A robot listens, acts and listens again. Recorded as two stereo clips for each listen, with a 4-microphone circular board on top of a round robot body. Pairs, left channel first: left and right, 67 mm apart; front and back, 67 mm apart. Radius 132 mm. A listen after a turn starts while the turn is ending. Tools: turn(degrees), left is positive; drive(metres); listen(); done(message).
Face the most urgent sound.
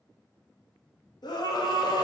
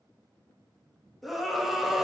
turn(degrees=90)
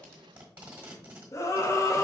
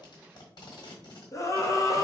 turn(degrees=45)
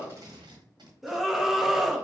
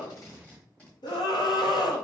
done("Found it: a scream, straight ahead.")